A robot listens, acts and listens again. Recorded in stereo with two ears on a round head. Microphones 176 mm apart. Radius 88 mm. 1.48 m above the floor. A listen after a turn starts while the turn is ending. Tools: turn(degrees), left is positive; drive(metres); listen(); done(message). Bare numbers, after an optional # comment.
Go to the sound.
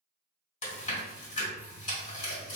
# The chewing: about 35° left or 145° left.
turn(35)
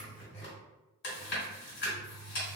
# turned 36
# So it is at 105° left.
turn(105)
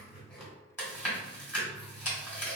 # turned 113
drive(1.0)
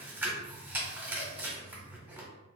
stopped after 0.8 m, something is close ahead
# The chewing is now 15° right.
turn(-15)
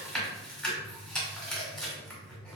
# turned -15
done("I am next to the chewing.")